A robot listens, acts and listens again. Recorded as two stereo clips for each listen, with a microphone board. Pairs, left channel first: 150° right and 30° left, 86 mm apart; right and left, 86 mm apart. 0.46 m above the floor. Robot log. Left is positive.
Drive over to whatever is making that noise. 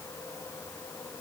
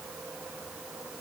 cmd idle
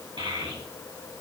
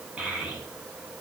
note: The child speaking: 10° left.
cmd yaw +10
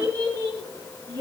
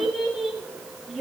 cmd fwd 1.0
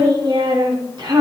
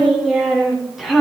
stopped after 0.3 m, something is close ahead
end: Blocked. The child speaking is further on, straight ahead.